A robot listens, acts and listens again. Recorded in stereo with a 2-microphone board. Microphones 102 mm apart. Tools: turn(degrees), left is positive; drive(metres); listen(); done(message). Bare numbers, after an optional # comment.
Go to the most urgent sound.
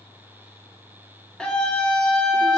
turn(30)
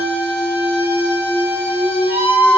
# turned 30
# So it is at 20° right.
turn(-20)
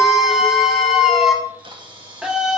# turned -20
drive(1.0)
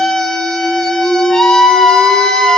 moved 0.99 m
drive(1.0)
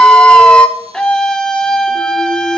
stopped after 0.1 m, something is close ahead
# The scream is now 10° left.
turn(10)
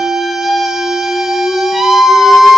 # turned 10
done("I am next to the scream.")